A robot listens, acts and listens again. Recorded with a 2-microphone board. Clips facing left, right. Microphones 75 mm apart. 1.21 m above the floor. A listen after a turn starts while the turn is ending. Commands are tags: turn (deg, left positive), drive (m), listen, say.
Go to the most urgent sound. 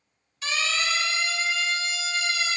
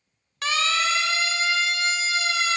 <turn deg="-90"/>
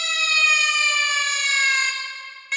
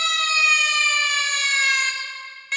<drive m="1.0"/>
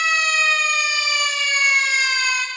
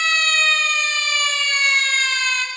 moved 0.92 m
<turn deg="10"/>
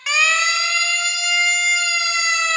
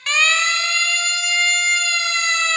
<drive m="1.0"/>
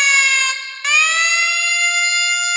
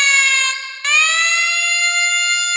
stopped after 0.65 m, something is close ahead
<say>I am next to the siren.</say>